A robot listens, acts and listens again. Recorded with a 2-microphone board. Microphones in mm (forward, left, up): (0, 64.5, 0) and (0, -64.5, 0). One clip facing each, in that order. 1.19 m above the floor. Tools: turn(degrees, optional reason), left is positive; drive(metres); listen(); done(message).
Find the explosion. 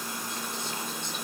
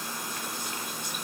listen()
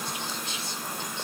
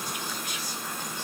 listen()
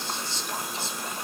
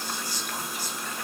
done("I can't make out an explosion to turn to.")